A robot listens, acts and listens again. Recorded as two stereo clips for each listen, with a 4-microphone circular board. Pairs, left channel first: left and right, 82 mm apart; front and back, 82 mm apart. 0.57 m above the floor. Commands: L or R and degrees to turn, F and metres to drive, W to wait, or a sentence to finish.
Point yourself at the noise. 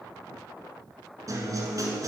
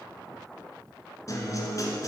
R45
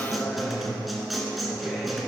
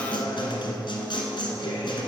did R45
Found it: a guitar, straight ahead.